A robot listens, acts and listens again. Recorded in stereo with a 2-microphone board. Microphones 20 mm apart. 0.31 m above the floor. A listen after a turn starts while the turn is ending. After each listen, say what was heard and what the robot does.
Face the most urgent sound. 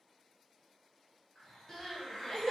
The crying: about 25° left or 155° left. Turn 25° left.
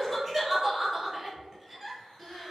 Found it: crying, straight ahead, 1 to 2 m away.